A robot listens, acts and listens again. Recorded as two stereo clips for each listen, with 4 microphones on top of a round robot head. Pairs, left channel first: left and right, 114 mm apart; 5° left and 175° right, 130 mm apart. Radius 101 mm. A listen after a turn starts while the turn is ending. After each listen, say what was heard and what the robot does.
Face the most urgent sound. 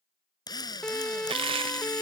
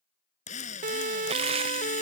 The siren: 175° left. Turn 175° left.
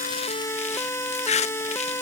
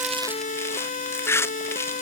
The siren is now 20° left. Turn 20° left.
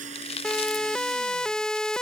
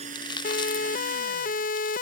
Facing the siren.